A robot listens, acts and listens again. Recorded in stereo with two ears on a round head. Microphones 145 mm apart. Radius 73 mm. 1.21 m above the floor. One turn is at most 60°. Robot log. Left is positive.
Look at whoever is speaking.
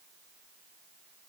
cmd idle
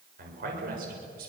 note: The man speaking: about 65° right or 115° right.
cmd yaw -60
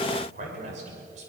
note: So it is at 45° right.
cmd yaw -45
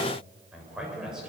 end: Found it: a man speaking, straight ahead, over 4 m away.